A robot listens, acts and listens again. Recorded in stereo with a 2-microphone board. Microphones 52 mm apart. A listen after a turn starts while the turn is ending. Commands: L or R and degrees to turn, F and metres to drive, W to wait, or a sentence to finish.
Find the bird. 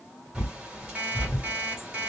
R20
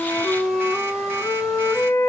W
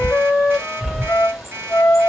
Found it: a bird, straight ahead, 1 to 2 m away.